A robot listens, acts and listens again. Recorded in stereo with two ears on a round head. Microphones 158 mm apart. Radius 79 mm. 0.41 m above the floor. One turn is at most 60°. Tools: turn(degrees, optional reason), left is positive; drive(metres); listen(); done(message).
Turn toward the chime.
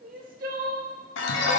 turn(degrees=60, reason="The chime: about 70° left or 110° left.")
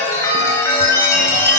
turn(degrees=15, reason="So it is at 15° left.")
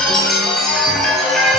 done("Facing the chime.")